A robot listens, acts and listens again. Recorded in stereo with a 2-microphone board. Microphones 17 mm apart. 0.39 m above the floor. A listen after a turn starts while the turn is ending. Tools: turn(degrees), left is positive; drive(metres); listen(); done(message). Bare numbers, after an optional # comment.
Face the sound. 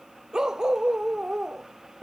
# The dog barking: about 35° right or 145° right.
turn(-35)
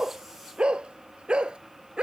# So it is at 115° right.
turn(-115)
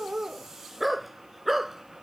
# The dog barking is now 10° right.
turn(-10)
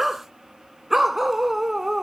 # The dog barking is now 15° right.
turn(-15)
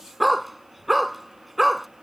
done("Facing the dog barking.")